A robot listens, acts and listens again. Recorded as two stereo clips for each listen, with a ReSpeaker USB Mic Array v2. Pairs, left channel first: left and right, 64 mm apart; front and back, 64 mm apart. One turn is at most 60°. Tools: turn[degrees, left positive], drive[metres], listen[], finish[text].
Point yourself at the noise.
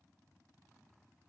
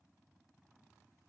Action: listen[]
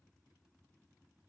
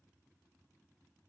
Action: listen[]
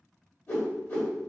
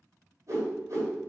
Thought: The whoosh: 145° left.
Action: turn[60]
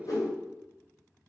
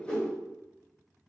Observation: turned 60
Thought: The whoosh is now 65° left.
Action: turn[60]
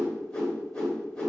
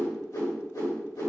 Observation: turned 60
Thought: The whoosh is now 10° left.
Action: turn[10]
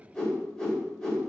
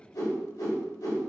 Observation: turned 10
Action: finish[Facing the whoosh.]